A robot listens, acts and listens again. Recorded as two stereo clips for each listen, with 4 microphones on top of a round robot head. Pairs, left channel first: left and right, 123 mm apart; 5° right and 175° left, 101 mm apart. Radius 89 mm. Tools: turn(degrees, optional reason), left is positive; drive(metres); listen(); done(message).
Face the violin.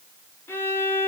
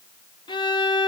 turn(degrees=20, reason="The violin: 20° left.")
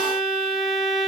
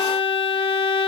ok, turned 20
done("Facing the violin.")